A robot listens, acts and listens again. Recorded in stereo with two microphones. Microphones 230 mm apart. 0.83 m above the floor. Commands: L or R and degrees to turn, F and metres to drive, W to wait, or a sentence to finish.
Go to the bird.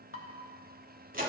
W
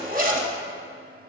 W
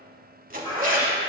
L20
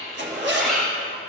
F1.0
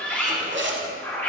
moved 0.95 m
L10
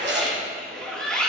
F1.0
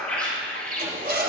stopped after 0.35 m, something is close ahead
Arrived at the bird, straight ahead.